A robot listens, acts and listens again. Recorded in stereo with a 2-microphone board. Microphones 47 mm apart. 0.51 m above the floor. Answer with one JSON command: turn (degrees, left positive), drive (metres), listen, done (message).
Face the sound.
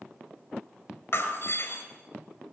{"turn": 65}
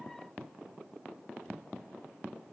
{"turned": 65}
{"listen": true}
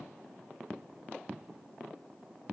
{"done": "I heard breaking glass, but can't make it out now. It was about straight ahead or 50° left."}